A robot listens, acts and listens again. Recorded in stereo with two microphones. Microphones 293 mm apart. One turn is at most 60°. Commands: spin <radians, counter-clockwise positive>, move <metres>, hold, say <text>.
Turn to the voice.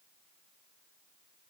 hold
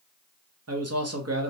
spin -0.96
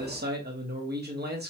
spin -0.70
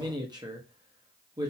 spin -0.26
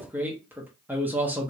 say Facing the man speaking.